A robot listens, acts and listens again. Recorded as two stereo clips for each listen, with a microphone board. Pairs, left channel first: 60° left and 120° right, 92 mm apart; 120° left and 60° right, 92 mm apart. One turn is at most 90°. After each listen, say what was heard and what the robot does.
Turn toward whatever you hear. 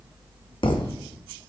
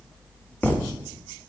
The thud: 50° left. Turn 50° left.
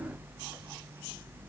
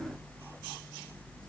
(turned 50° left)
I heard a thud from this way, but can't make it out now.